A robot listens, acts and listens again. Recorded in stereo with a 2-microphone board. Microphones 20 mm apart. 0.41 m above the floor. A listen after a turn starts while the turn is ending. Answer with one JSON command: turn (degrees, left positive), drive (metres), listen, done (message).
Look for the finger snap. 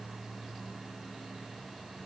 {"listen": true}
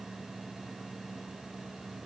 {"listen": true}
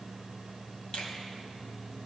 {"turn": 55}
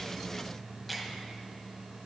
{"turn": 10}
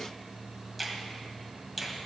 {"done": "Facing the finger snap."}